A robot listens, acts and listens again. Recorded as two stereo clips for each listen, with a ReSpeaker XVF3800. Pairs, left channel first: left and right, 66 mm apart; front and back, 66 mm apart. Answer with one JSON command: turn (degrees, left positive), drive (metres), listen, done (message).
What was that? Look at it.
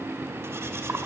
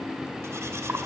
{"turn": -135}
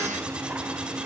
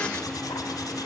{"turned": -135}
{"listen": true}
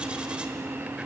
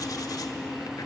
{"listen": true}
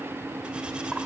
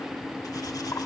{"done": "Facing where the cutlery clinking came from. I can't hear it now."}